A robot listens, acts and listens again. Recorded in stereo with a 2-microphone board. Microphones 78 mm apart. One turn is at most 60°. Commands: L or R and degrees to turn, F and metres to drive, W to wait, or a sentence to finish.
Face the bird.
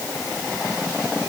W
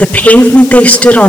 W
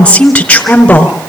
I can't make out a bird, only a woman speaking.